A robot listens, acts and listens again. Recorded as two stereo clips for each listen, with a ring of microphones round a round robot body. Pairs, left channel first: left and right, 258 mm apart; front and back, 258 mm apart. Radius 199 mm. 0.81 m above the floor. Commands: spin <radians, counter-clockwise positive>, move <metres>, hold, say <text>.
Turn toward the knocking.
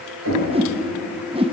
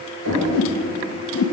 spin -2.36
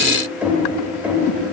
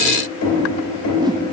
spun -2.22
say Found it: knocking, straight ahead, 2 to 4 m away.